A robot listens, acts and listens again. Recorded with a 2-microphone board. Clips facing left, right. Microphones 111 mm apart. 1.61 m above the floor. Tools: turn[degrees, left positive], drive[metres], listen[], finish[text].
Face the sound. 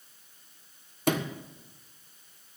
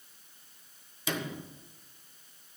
Thought: The sliding door: about 55° left or 125° left.
Action: turn[55]
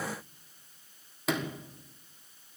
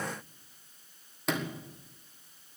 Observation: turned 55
Action: finish[Found it: a sliding door, straight ahead, 1 to 2 m away.]